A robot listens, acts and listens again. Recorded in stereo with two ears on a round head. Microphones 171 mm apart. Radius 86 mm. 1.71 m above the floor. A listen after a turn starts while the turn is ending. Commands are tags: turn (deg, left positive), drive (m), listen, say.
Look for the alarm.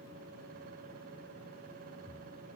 <listen/>
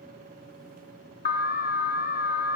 <turn deg="50"/>
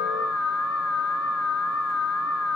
<turn deg="85"/>
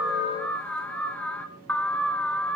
<say>Found it: an alarm, straight ahead.</say>